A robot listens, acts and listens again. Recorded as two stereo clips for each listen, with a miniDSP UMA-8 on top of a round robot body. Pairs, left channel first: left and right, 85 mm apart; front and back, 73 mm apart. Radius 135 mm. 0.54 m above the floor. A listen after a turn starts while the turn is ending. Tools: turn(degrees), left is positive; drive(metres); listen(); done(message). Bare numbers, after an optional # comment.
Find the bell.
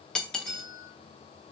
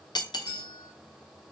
# The bell: 55° right.
turn(-55)
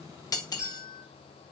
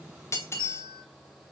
# The bell is now 10° right.
turn(-10)
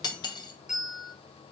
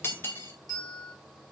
done("Found it: a bell, straight ahead, 2 to 4 m away.")